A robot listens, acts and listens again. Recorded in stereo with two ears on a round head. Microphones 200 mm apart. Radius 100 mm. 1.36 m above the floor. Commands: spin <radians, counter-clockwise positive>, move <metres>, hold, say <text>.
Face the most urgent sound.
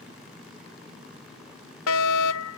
spin 1.57
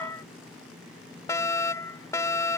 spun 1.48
spin 0.26
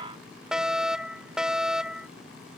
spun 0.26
say Found it: a fire alarm, straight ahead.